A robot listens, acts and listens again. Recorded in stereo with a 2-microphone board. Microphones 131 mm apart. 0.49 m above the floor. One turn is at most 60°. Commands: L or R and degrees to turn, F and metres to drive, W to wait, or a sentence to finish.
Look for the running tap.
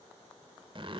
W
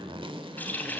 L30
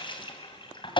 L60
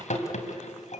L60
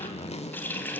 L15
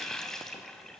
Found it: a running tap, straight ahead, 2 to 4 m away.